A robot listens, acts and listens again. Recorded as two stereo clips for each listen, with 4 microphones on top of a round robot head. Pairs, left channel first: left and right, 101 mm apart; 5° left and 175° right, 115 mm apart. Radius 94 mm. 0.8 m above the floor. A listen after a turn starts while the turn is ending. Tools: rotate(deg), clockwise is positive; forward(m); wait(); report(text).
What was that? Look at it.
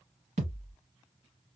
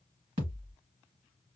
rotate(120)
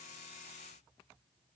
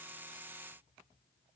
report("I heard a thud from this way, but can't make it out now.")